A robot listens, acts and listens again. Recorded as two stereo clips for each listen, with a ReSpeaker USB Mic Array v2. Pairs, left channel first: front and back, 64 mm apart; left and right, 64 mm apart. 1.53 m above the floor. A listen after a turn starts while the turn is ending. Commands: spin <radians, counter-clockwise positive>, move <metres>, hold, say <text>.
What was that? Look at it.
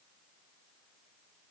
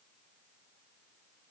hold
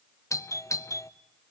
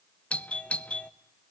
spin 0.35
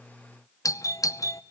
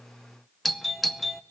say Found it: a doorbell, straight ahead, under 1 m away.